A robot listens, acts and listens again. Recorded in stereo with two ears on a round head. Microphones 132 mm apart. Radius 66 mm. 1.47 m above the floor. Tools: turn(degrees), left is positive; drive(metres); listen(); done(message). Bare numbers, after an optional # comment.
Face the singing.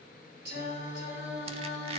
turn(-90)
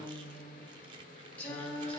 done("Facing the singing.")